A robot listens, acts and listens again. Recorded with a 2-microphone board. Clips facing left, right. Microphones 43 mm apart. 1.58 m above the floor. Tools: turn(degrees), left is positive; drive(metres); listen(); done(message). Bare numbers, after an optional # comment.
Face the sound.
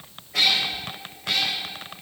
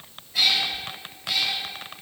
# The cat meowing: about 70° left or 110° left.
turn(70)
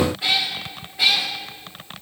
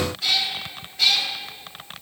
# So it is at 20° left.
turn(20)
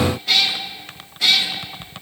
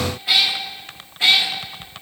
# The cat meowing is now 30° right.
turn(-30)
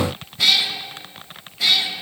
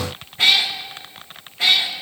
# The cat meowing is now 35° right.
turn(-35)
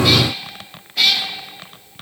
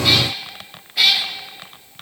done("Facing the cat meowing, 1 to 2 m away.")